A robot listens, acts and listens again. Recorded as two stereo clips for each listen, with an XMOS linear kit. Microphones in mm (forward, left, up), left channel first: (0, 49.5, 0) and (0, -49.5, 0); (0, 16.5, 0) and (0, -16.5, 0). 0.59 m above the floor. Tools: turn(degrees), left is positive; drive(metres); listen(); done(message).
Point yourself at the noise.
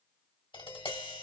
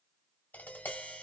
turn(degrees=65)
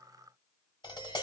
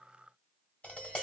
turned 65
turn(degrees=50)
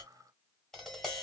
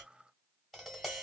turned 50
done("Facing the tapping, 1 to 2 m away.")